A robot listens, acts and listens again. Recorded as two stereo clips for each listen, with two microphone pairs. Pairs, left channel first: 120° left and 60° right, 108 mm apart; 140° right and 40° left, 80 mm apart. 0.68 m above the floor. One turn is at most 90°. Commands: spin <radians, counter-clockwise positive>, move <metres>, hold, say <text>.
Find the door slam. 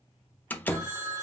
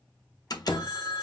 spin -1.57
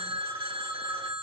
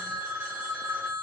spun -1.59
spin -1.40
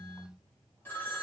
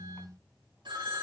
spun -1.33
say I heard a door slam from this way, but can't make it out now.